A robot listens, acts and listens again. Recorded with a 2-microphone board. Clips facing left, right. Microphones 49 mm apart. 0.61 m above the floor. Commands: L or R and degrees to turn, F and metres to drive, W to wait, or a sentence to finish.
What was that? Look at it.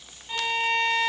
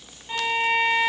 R30
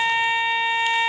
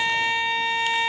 L15
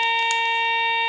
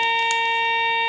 Facing the violin, under 1 m away.